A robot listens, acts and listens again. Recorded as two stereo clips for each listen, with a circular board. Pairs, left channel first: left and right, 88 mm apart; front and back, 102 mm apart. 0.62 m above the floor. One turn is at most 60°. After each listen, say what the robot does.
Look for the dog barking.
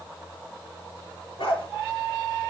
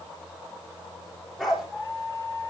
Turn 60° left.
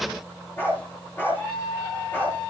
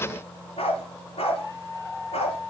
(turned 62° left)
Turn 20° left.
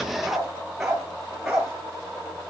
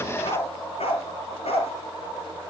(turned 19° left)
Facing the dog barking, over 4 m away.